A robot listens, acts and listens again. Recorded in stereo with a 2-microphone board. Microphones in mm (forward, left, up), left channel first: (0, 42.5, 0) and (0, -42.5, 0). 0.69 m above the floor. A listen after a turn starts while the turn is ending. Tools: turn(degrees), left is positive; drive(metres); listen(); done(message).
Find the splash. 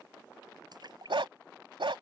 turn(degrees=-55)
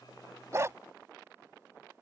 listen()
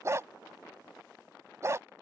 done("I heard a splash, but can't make it out now. It was about straight ahead or 70° right.")